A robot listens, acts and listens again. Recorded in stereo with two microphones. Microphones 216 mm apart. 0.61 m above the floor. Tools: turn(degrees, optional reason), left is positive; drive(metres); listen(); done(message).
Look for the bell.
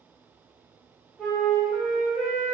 listen()
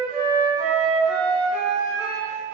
listen()
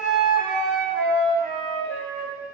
done("I can't make out a bell to turn to.")